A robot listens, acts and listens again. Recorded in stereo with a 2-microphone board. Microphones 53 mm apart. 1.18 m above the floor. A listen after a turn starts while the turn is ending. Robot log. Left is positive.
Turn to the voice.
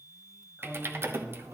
note: The man speaking: about 30° right or 150° right.
cmd yaw -30
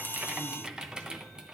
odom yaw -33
cmd idle
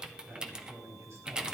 note: So it is at 120° right.
cmd yaw -120
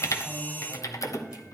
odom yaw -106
note: The man speaking is now 15° right.
cmd yaw -15
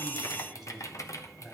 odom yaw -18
end: Facing the man speaking.